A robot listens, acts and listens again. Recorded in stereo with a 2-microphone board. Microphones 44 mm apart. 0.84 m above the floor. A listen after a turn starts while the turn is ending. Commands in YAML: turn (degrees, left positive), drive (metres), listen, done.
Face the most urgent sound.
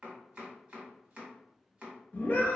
turn: 50
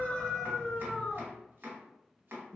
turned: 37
turn: 20
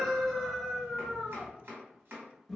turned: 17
done: "Facing the scream."